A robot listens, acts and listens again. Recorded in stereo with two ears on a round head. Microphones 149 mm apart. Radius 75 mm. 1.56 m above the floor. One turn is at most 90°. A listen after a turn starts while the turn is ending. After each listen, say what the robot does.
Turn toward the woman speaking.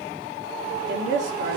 Turn 90° right.
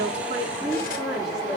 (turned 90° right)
Facing the woman speaking, over 4 m away.